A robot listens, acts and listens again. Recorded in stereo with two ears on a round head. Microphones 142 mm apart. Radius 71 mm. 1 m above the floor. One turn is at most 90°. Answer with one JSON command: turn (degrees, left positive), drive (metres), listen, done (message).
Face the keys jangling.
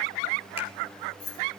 {"turn": 50}
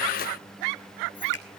{"listen": true}
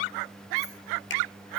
{"listen": true}
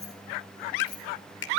{"turn": 25}
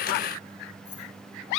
{"turn": 15}
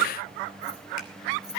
{"listen": true}
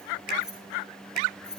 {"done": "Facing the keys jangling."}